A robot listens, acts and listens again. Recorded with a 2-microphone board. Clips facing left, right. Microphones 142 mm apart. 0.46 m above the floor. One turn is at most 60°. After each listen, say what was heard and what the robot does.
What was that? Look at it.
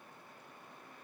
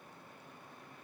Keep listening.
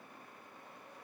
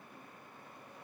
Keep listening.
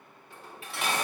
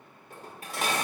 The dishes clattering: about 45° right or 135° right. Turn 45° right.
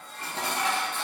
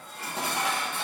So it is at 10° right. Turn 10° right.
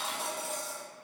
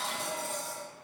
Facing the dishes clattering, under 1 m away.